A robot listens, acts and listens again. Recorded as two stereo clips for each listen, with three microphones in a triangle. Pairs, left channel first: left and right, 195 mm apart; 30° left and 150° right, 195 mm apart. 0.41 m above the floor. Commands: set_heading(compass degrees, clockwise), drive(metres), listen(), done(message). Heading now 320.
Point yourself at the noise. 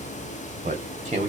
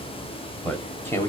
set_heading(5)
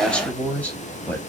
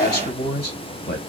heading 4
set_heading(354)
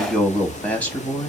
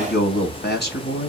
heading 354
set_heading(344)
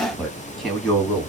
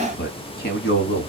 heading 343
done("Found it: a man speaking, straight ahead.")